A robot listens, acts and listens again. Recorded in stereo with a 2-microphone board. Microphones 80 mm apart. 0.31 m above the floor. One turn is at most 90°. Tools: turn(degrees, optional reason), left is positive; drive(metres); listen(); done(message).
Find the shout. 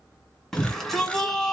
turn(degrees=30)
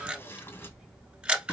listen()
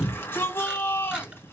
turn(degrees=90, reason="So it is at 145° left.")
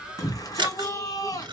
turn(degrees=60, reason="The shout is now 60° left.")
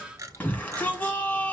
turn(degrees=20, reason="The shout is now 20° left.")
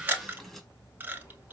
done("Found it: a shout, straight ahead.")